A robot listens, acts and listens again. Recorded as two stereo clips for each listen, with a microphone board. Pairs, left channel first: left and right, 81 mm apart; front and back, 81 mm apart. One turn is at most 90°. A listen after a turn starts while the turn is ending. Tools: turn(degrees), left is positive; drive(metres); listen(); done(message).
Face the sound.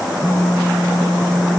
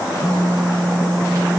turn(degrees=90)
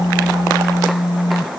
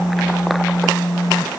turn(degrees=75)
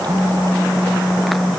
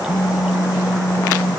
turn(degrees=25)
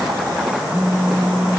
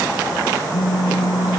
done("Facing the phone buzzing.")